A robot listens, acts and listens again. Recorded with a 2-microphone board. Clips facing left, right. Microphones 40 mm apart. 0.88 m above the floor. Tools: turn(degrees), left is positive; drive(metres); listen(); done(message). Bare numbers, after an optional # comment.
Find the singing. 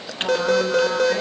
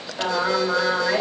# The singing: about 50° right or 130° right.
turn(-50)
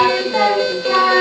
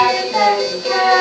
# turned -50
done("Facing the singing, over 4 m away.")